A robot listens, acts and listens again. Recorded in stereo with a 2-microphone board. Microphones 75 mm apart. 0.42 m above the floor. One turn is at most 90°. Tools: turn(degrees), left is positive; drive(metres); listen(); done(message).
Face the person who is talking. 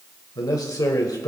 turn(degrees=55)
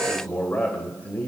turn(degrees=25)
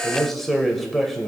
done("Facing the man speaking.")